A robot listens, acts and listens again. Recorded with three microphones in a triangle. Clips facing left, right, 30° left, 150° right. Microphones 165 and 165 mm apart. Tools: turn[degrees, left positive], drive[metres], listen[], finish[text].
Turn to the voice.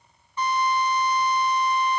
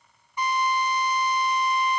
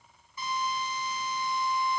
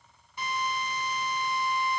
Action: listen[]
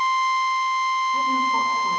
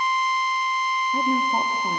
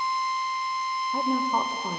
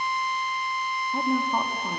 Thought: The woman speaking: 60° right.
Action: turn[-60]
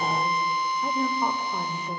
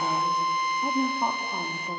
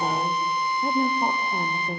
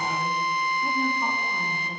Thought: The woman speaking is now 15° right.
Action: turn[-15]
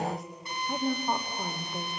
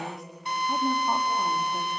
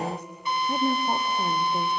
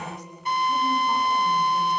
Action: finish[Facing the woman speaking.]